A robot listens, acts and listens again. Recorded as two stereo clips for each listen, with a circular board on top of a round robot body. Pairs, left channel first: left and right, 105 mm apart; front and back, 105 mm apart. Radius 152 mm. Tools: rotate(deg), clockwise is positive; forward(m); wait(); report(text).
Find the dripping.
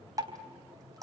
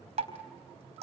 rotate(150)
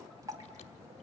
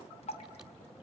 rotate(30)
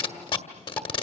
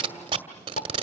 wait()
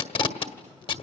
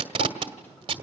wait()
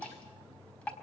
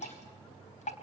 rotate(-10)
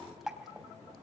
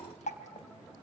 report("Facing the dripping, 2 to 4 m away.")